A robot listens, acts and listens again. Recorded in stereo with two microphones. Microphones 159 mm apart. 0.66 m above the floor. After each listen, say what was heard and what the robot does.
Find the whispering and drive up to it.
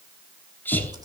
Turn 30° left.
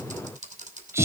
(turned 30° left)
Keep listening.
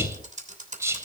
So it is at 15° right. Turn 15° right.
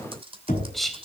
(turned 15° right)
Drive 1.0 m forward.
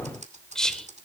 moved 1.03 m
Drive 1.0 m forward.
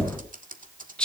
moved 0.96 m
The whispering is now 10° left. Turn 10° left.
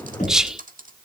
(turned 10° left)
Drive 1.0 m forward.
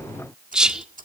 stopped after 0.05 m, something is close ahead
Arrived at the whispering, straight ahead.